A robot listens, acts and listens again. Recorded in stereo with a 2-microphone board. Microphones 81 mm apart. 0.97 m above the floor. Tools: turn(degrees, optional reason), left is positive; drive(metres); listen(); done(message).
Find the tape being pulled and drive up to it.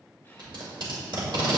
turn(degrees=-75, reason="The tape being pulled: about 75° right or 105° right.")
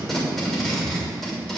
drive(metres=1.0)
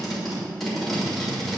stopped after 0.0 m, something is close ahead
done("Blocked. The tape being pulled is further on, straight ahead.")